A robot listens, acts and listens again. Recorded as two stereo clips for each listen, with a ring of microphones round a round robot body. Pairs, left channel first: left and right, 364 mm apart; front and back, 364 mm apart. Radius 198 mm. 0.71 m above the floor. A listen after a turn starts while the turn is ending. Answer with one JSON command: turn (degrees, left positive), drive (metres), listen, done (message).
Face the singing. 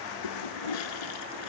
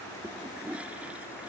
{"listen": true}
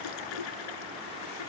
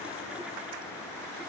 {"listen": true}
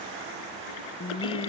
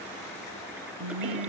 {"turn": 165}
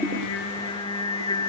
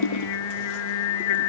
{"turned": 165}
{"turn": 10}
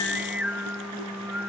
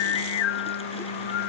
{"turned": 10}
{"done": "Found it: singing, straight ahead."}